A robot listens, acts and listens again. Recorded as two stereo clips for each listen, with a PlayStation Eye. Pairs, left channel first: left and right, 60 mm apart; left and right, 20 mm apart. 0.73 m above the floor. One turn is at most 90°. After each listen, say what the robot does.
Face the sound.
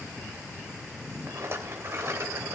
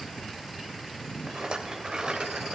Turn 45° right.
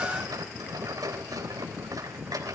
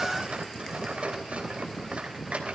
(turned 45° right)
Turn 90° right.
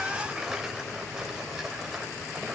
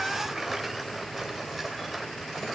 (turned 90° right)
Turn 10° right.
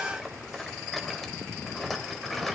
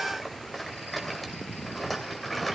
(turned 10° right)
Found it: a rattle, straight ahead, 2 to 4 m away.